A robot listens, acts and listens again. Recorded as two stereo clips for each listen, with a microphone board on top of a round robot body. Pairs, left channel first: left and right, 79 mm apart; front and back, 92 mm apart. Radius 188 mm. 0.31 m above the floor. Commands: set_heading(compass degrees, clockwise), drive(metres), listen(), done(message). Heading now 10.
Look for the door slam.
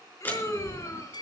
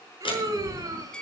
set_heading(345)
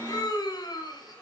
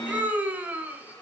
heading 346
done("Facing where the door slam came from. I can't hear it now.")